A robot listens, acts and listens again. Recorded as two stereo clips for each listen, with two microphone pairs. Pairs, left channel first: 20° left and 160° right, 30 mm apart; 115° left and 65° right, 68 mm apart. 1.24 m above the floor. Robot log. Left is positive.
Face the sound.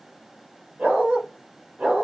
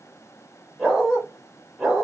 note: The dog barking: 155° right.
cmd yaw -155
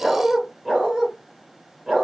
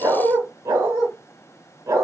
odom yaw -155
note: The dog barking is now 85° right.
cmd yaw -85
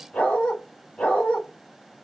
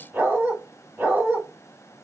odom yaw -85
end: Facing the dog barking, 2 to 4 m away.